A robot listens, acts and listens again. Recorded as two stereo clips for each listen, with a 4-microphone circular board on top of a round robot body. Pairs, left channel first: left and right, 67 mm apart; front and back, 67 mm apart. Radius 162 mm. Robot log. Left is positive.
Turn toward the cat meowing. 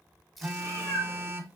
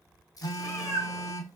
note: The cat meowing: 85° left.
cmd yaw +85
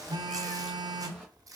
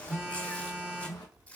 cmd idle
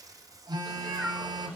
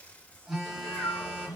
note: The cat meowing is now 15° left.
cmd yaw +15
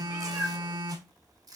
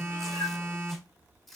end: Facing the cat meowing.